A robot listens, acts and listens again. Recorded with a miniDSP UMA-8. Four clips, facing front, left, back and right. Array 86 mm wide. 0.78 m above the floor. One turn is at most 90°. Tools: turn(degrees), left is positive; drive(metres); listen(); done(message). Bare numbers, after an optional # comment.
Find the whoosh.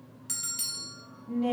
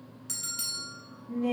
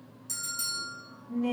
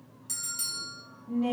listen()
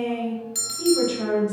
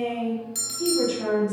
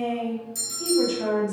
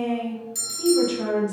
listen()
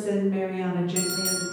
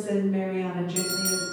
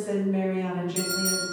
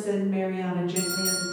done("I can't make out a whoosh to turn to.")